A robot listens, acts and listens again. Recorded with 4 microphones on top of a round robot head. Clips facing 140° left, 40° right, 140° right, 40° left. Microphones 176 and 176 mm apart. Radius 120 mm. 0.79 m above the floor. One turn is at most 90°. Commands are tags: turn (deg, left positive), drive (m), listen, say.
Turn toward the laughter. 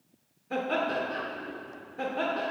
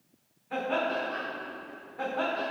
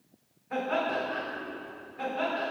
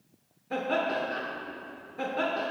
<turn deg="75"/>
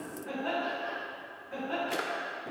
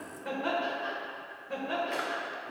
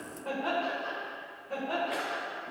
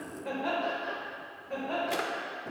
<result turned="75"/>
<turn deg="-55"/>
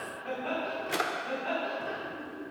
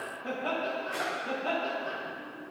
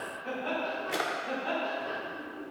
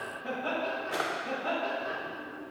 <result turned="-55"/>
<say>Facing the laughter.</say>